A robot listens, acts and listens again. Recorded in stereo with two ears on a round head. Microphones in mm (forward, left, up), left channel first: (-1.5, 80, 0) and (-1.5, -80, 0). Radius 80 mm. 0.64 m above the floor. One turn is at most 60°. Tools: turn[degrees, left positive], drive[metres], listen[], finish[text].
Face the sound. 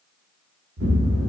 Thought: The explosion: about 70° right or 110° right.
Action: turn[-60]
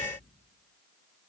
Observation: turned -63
Action: listen[]
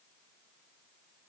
Action: finish[I heard an explosion, but can't make it out now. It was about 5° right or 50° right.]